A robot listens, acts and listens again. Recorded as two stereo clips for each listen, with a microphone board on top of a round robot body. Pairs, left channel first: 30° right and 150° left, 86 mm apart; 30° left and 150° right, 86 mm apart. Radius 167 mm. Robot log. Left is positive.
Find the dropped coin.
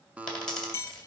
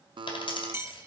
note: The dropped coin: 50° left.
cmd yaw +50
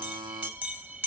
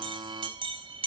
end: Facing where the dropped coin came from. I can't hear it now.